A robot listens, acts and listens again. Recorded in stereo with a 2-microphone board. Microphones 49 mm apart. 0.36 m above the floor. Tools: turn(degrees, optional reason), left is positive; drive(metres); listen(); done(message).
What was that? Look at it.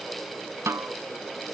turn(degrees=-90)
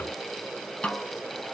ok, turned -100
turn(degrees=25, reason="So it is at 25° left.")
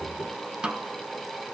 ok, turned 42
turn(degrees=-20, reason="The snare drum is now 20° right.")
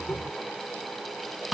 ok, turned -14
done("Facing the snare drum.")